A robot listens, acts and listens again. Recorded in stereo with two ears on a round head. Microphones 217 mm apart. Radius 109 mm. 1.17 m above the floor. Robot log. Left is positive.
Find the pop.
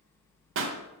note: The pop: about 55° right or 125° right.
cmd yaw -55
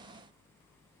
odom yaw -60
cmd idle
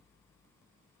end: I heard a pop, but can't make it out now. It was about 5° left or 65° right.